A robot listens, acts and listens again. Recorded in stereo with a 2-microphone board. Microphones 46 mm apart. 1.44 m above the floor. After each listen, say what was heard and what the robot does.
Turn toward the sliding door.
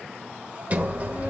The sliding door: about 35° right or 145° right. Turn 35° right.
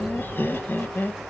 Facing the sliding door.